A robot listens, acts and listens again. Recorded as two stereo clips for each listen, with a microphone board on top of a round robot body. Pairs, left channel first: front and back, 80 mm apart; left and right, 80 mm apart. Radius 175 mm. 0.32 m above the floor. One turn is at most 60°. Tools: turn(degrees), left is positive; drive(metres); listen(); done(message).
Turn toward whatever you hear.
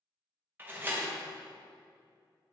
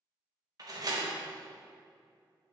turn(degrees=-60)
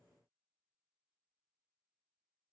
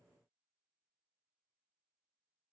turn(degrees=-60)
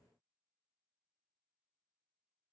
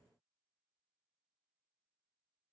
done("I heard a door slam from this way, but can't make it out now.")